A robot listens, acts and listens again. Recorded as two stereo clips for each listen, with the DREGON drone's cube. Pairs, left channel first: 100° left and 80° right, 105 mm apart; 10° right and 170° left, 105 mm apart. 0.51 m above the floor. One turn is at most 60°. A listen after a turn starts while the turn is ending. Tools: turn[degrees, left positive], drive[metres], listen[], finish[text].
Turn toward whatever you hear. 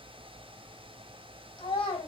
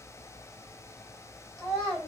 Thought: The child speaking: 75° left.
Action: turn[60]
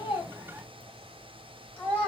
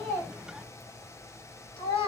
Thought: The child speaking is now 20° left.
Action: turn[20]
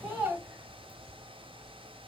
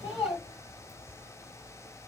Action: finish[Facing the child speaking.]